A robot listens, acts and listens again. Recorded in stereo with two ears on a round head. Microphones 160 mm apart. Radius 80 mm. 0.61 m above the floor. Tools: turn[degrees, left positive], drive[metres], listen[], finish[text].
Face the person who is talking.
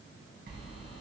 Action: listen[]
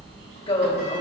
Thought: The woman speaking: about 30° left or 150° left.
Action: turn[30]
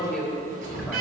Action: finish[Facing the woman speaking.]